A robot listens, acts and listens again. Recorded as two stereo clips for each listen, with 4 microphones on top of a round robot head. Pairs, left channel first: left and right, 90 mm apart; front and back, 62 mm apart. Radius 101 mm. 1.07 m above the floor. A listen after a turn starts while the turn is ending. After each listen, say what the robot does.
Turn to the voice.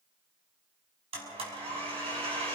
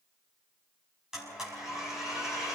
Keep listening.
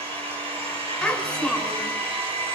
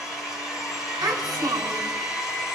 Turn 170° left.
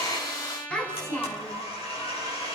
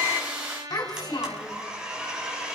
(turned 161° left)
Turn 10° left.
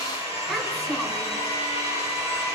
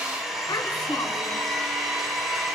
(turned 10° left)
Found it: a child speaking, straight ahead.